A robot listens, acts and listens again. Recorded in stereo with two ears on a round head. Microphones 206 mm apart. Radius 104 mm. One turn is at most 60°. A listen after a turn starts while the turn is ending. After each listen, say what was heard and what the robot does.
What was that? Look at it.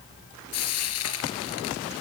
The frying: about 75° left or 105° left. Turn 60° left.
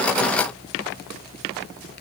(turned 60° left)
Keep listening.
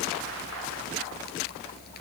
Keep listening.
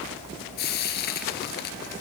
So it is at 45° left. Turn 45° left.
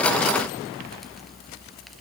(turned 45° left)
Keep listening.
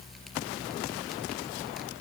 Keep listening.
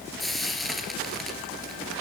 Facing the frying, 2 to 4 m away.